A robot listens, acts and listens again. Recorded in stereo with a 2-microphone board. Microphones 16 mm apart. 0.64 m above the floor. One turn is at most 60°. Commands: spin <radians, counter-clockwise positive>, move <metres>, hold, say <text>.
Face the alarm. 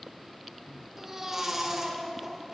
hold
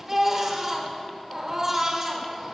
hold
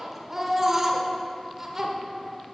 say I can't make out an alarm to turn to.